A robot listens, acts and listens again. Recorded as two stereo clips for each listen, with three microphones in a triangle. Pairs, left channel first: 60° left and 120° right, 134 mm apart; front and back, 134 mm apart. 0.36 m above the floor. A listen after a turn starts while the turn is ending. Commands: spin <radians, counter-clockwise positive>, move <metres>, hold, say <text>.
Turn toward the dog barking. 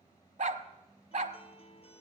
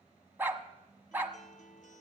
spin -1.83
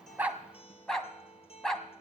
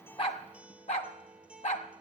spin -0.44
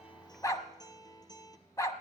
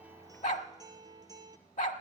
say Found it: a dog barking, straight ahead, 1 to 2 m away.